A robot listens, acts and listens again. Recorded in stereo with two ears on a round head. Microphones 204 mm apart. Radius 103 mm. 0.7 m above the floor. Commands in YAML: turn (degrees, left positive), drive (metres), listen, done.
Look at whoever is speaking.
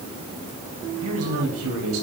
turn: -70
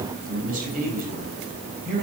turn: -40
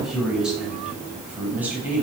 turn: -10
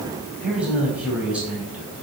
done: "Found it: a man speaking, straight ahead."